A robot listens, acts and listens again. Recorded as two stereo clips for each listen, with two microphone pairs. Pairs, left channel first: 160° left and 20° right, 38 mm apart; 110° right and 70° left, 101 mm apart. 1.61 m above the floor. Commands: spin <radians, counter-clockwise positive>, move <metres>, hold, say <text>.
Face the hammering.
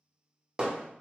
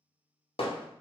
spin -1.66
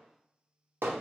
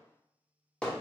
spin -0.52
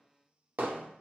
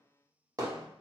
spin 0.26
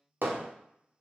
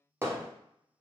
say Found it: hammering, straight ahead.